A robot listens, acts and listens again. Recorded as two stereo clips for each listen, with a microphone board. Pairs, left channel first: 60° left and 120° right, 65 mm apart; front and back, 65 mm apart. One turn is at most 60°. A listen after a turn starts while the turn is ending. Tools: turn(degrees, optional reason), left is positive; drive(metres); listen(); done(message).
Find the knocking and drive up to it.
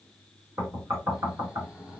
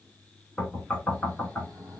turn(degrees=-60, reason="The knocking: 80° right.")
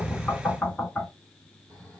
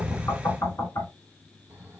turn(degrees=-20, reason="The knocking is now 20° right.")
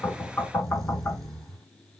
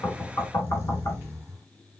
turn(degrees=-10, reason="The knocking is now 10° right.")
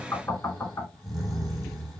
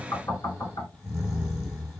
drive(metres=1.0)
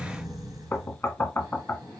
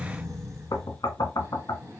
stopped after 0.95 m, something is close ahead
done("I am next to the knocking.")